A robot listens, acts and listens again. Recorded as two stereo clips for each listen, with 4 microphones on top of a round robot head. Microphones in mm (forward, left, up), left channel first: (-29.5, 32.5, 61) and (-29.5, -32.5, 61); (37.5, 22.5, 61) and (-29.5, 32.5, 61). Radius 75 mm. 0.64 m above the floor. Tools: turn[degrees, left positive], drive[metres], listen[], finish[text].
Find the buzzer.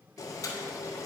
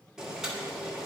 Action: listen[]
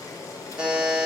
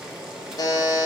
Thought: The buzzer: 10° right.
Action: turn[-10]
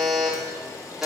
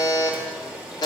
Action: finish[Facing the buzzer, under 1 m away.]